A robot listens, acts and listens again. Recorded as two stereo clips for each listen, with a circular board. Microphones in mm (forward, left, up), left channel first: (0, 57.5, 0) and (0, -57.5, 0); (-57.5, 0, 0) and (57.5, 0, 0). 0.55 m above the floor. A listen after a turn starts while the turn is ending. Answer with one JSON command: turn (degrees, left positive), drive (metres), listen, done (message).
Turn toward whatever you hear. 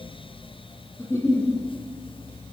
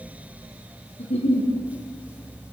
{"turn": 155}
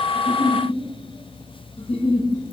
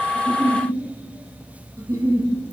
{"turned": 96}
{"turn": 60}
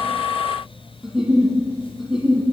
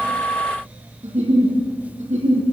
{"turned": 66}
{"done": "Facing the giggle, over 4 m away."}